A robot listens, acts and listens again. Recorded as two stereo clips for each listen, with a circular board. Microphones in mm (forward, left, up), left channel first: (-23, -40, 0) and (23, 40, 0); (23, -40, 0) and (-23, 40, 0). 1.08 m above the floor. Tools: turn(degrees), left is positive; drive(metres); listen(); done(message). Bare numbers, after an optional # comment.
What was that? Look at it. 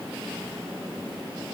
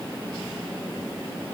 listen()
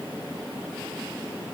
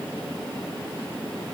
listen()
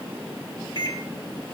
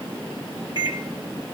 # The microwave: 85° right.
turn(-85)
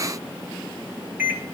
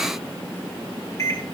done("Found it: a microwave, straight ahead.")